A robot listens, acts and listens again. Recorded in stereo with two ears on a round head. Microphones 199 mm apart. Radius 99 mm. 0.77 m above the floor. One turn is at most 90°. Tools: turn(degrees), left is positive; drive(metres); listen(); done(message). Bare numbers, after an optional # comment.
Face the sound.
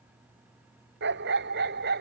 # The dog barking: about 50° right or 130° right.
turn(-50)
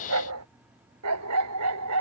# So it is at 85° right.
turn(-85)
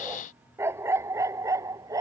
# The dog barking is now 15° right.
turn(-15)
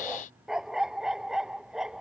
done("Found it: a dog barking, straight ahead.")